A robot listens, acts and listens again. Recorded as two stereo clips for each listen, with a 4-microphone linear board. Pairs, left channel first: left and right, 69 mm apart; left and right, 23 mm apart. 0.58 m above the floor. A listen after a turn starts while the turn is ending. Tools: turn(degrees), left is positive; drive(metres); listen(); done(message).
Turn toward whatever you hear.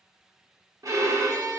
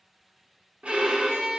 turn(degrees=-55)
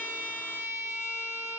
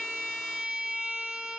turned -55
turn(degrees=-50)
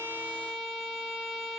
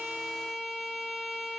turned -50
done("Found it: a violin, straight ahead, under 1 m away.")